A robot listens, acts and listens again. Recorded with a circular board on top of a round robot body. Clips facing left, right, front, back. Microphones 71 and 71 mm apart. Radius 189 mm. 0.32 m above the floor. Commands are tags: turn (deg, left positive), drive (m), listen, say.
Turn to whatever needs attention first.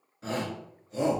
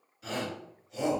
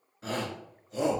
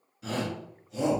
<turn deg="40"/>
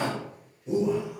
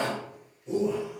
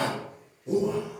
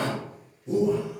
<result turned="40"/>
<turn deg="10"/>
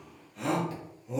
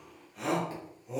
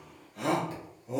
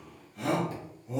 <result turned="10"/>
<say>Facing the shout.</say>